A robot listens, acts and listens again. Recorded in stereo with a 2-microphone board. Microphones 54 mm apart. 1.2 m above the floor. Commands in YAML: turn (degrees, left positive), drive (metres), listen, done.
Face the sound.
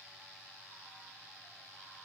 listen: true
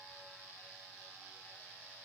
listen: true
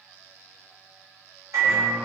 turn: -75
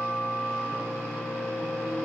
turn: -20
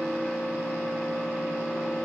done: "Facing the microwave."